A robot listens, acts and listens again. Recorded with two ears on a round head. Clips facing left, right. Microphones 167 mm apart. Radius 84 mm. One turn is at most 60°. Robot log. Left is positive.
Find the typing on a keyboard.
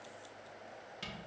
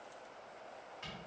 cmd idle
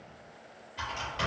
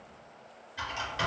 cmd yaw -30
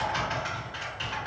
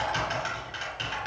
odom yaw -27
note: So it is at 140° right.
cmd yaw -60
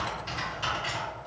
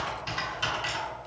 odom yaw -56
note: The typing on a keyboard is now 85° right.
cmd yaw -60
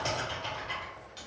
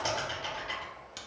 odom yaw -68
note: The typing on a keyboard is now 15° right.
cmd yaw -15
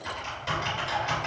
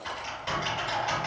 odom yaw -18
end: Facing the typing on a keyboard, 1 to 2 m away.